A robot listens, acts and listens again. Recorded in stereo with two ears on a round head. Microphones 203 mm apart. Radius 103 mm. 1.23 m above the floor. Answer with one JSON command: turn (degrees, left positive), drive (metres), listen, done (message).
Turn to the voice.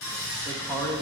{"turn": 30}
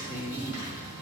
{"turn": 135}
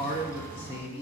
{"turn": 25}
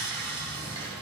{"listen": true}
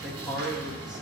{"done": "Facing the man speaking, 1 to 2 m away."}